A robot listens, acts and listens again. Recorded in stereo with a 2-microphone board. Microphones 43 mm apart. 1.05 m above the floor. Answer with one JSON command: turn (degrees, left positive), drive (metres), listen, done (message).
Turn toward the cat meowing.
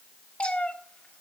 {"turn": 25}
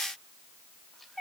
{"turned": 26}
{"done": "Facing the cat meowing."}